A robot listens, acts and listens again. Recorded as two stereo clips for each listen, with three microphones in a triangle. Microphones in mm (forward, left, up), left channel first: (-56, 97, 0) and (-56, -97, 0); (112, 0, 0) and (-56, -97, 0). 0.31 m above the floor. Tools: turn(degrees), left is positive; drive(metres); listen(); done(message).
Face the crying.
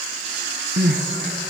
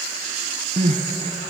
turn(degrees=-95)
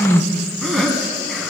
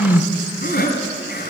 done("Found it: crying, straight ahead.")